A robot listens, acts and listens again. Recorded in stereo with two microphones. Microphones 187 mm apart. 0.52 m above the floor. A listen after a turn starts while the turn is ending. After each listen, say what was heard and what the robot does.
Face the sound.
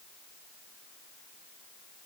Keep listening.
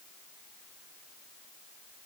Keep listening.
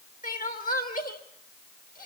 The crying: about 50° left or 130° left. Turn 50° left.
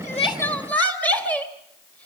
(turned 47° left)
So it is at 10° left. Turn 10° left.
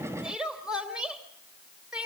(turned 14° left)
Found it: crying, straight ahead, 2 to 4 m away.